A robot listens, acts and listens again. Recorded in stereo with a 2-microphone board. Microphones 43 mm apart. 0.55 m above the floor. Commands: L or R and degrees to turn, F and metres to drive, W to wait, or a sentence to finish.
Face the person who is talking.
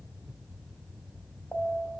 W
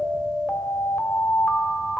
W
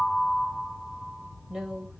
R30
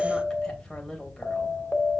L15
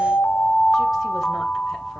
W
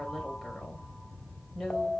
Facing the woman speaking.